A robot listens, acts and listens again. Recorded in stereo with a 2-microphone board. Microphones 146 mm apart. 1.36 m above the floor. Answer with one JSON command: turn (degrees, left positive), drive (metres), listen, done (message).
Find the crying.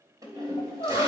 {"turn": 30}
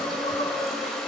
{"turn": 125}
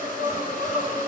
{"turn": 30}
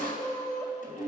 {"turn": 20}
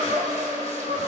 {"done": "Facing the crying, over 4 m away."}